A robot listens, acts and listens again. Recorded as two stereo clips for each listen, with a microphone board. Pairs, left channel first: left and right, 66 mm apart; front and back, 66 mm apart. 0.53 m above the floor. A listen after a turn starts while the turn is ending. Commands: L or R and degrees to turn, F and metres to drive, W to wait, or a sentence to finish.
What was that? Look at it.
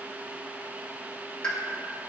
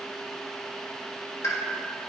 L15
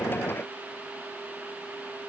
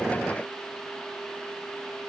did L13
Facing where the pop came from. I can't hear it now.